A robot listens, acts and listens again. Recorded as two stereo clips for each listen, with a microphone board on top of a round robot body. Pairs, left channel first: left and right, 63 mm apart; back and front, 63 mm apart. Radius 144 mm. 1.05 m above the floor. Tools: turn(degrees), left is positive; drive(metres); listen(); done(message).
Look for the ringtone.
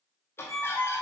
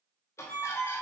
turn(degrees=-130)
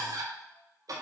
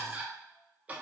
listen()
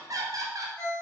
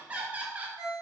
turn(degrees=25)
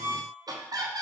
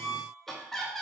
done("Found it: a ringtone, straight ahead, 1 to 2 m away.")